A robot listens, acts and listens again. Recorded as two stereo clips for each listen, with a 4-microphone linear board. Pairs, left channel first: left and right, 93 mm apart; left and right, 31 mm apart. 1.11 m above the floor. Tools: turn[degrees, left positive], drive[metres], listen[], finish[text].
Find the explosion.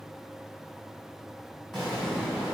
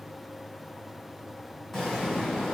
Action: turn[30]
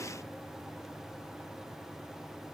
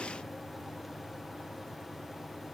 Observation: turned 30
Action: listen[]
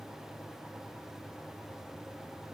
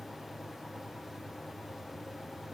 Action: finish[I heard an explosion, but can't make it out now. It was about 30° right or 150° left.]